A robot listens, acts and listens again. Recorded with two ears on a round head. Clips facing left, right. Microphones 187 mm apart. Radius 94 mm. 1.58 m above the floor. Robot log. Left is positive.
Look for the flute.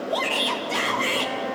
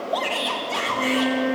cmd yaw -90
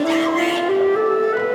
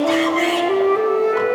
note: So it is at 15° left.
cmd yaw +15
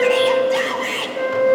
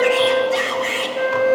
end: Facing the flute.